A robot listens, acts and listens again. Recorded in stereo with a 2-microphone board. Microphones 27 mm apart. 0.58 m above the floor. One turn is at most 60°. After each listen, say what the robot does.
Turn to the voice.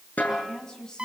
Turn 30° left.
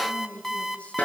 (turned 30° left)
Turn 60° left.
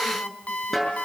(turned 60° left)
Turn 60° left.
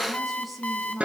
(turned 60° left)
Found it: a woman speaking, straight ahead, over 4 m away.